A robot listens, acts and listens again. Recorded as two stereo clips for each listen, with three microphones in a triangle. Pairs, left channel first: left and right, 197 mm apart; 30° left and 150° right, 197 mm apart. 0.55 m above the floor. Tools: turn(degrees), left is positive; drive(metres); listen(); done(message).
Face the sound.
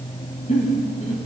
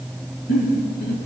turn(degrees=40)
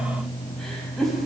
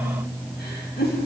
done("Facing the giggle.")